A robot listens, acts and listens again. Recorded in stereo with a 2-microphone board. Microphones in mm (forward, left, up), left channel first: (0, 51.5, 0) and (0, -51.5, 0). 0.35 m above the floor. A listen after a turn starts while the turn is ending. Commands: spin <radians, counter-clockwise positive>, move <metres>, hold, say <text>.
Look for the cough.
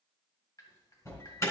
hold
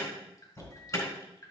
hold
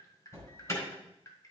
say I can't make out a cough to turn to.